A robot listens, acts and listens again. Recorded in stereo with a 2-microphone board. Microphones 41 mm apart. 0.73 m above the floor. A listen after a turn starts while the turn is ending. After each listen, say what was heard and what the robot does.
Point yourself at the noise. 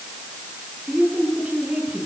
The woman speaking: about 30° right or 150° right. Turn 30° right.
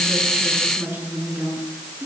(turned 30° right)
So it is at 120° right. Turn 120° right.
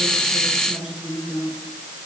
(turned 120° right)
The woman speaking is now 15° right. Turn 15° right.
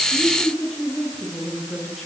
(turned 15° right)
Found it: a woman speaking, straight ahead, over 4 m away.